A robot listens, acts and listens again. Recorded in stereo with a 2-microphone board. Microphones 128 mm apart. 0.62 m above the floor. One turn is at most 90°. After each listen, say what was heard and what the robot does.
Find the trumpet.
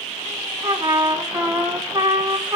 The trumpet: about 20° right or 160° right. Turn 20° right.
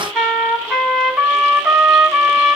Found it: a trumpet, straight ahead, 2 to 4 m away.